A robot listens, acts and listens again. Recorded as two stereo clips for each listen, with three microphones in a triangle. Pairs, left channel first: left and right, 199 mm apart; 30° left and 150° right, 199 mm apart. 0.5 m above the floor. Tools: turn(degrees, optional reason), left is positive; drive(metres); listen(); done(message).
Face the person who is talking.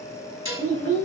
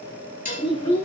turn(degrees=15, reason="The child speaking: 15° left.")
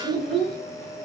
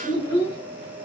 done("Facing the child speaking.")